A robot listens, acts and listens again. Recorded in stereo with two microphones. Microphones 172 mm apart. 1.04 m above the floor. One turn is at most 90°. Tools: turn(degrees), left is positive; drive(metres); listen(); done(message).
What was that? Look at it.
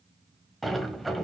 turn(degrees=30)
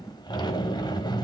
turn(degrees=90)
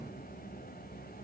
turn(degrees=80)
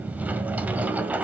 turn(degrees=-10)
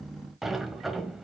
done("Facing the sliding door.")